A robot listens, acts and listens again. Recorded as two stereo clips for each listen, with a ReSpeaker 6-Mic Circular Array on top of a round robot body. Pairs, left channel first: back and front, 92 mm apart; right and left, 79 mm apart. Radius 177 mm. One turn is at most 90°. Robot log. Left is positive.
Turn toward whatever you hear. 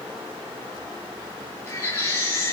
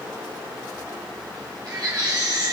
note: The baby crying: 125° left.
cmd yaw +90
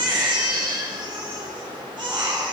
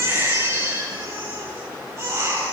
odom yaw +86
note: The baby crying is now 35° left.
cmd yaw +35
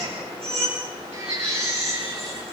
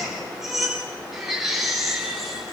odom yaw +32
end: Found it: a baby crying, straight ahead, over 4 m away.